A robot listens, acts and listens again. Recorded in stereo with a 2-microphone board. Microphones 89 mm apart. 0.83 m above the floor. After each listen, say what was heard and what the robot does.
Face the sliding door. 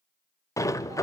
The sliding door: about 35° left or 145° left. Turn 35° left.
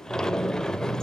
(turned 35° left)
So it is at 10° left. Turn 10° left.
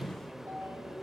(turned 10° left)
Facing the sliding door, under 1 m away.